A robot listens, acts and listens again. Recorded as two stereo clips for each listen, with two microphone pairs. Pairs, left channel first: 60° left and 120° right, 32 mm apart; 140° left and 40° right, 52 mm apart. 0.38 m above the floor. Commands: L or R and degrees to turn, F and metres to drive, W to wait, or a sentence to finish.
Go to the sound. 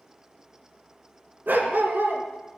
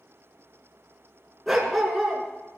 R130
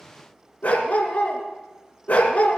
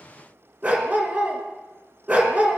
L15
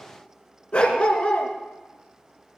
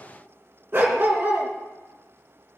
F1.0
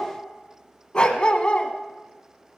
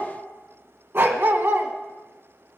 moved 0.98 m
F1.0
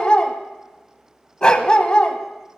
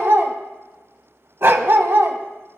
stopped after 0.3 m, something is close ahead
Arrived at the dog barking, straight ahead.